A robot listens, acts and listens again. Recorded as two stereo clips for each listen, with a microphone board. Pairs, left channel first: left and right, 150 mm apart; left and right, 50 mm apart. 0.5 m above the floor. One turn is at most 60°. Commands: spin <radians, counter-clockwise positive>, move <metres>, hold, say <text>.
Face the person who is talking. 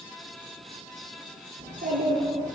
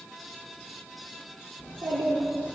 spin -1.05
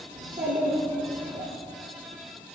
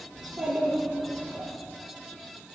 spin -0.61
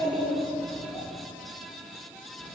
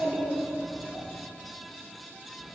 say Found it: a child speaking, straight ahead.